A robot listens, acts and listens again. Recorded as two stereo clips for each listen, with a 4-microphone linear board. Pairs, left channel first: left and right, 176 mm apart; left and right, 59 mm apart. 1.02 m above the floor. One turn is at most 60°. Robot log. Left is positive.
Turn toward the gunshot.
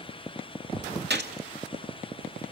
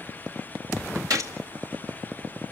note: The gunshot: about 65° right or 115° right.
cmd yaw -60
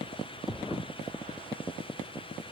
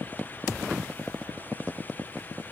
cmd idle
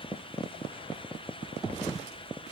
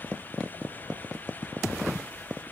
end: I heard a gunshot, but can't make it out now. It was about 5° right or 55° right.